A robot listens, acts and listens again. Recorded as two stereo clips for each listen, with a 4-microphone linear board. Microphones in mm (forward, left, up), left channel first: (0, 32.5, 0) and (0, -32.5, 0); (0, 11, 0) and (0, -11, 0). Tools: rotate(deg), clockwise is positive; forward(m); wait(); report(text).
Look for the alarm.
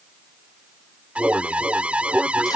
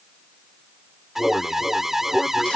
rotate(20)
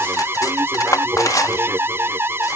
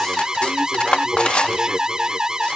rotate(140)
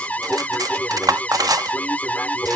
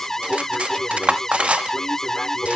rotate(-25)
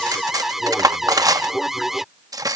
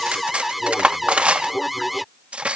report("Found it: an alarm, straight ahead.")